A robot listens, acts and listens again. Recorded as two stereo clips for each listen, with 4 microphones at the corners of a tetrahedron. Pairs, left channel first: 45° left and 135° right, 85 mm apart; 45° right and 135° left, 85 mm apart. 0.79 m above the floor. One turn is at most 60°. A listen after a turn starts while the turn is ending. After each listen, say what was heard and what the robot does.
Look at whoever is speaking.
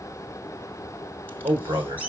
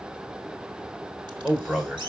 The man speaking: 135° right. Turn 60° right.
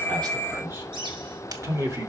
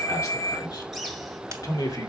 The man speaking is now 85° right. Turn 60° right.
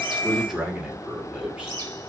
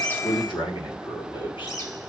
The man speaking is now 55° right. Turn 55° right.
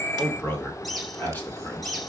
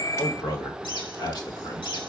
The man speaking is now 20° right. Turn 20° right.
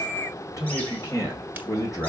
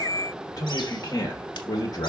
Found it: a man speaking, straight ahead, 2 to 4 m away.